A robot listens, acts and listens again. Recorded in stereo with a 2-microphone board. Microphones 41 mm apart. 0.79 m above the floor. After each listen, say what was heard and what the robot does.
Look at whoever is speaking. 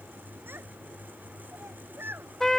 The child speaking: about 65° right or 115° right. Turn 65° right.
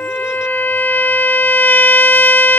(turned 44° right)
Keep listening.
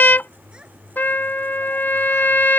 Keep listening.
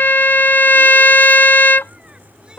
I heard a child speaking, but can't make it out now. It was about 20° right or 70° right.